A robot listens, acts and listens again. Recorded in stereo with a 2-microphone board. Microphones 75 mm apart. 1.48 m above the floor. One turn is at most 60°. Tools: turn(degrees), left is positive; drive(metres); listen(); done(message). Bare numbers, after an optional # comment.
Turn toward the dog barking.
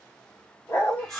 # The dog barking: about 35° left or 145° left.
turn(35)
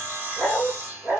# So it is at 15° right.
turn(-15)
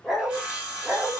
# The dog barking is now 15° right.
turn(-15)
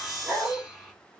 # The dog barking is now 15° right.
turn(-15)
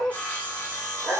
# The dog barking is now 10° right.
turn(-10)
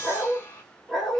done("Found it: a dog barking, straight ahead.")